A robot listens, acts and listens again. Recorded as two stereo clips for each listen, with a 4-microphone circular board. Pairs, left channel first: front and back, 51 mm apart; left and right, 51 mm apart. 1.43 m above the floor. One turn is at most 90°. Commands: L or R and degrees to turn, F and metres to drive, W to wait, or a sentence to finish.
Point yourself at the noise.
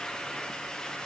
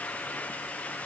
W
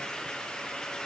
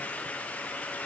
W
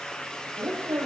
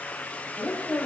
L90
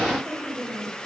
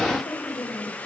L85
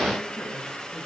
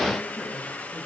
W
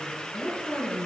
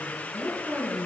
Facing the woman speaking.